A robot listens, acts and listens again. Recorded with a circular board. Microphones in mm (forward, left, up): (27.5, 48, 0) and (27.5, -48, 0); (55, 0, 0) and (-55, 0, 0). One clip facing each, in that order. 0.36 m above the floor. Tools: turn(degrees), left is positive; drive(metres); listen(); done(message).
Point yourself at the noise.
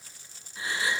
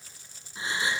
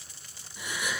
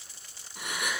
turn(degrees=-155)
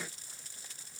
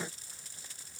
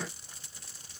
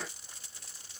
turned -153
done("I heard a gasp from this way, but can't make it out now.")